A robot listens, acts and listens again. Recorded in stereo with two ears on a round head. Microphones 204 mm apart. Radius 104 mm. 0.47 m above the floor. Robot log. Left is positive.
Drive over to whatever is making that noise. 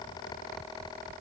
cmd idle
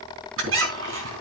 note: The squeak: about 60° right or 120° right.
cmd yaw -60
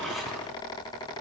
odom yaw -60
cmd idle
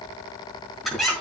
cmd fwd 1.0
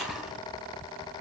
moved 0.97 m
cmd fwd 1.0
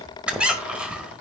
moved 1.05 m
cmd fwd 1.0
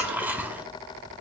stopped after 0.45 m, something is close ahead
note: The squeak is now 10° right.
cmd yaw -10
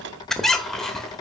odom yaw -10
end: Arrived at the squeak, straight ahead.